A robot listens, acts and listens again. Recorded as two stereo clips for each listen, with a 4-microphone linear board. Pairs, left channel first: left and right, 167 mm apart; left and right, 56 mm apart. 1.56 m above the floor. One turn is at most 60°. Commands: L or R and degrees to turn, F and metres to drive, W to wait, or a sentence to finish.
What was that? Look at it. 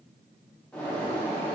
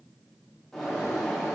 L30
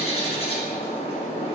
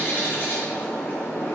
L60
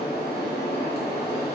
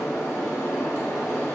L60
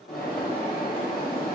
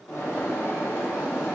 L60
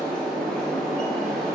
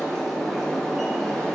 Facing the bird.